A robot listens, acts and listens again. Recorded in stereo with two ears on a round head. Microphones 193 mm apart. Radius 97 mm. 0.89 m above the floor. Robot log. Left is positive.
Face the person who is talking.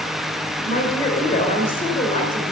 note: The woman speaking: about 25° left or 155° left.
cmd yaw +25
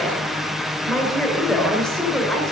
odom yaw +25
end: Facing the woman speaking, 2 to 4 m away.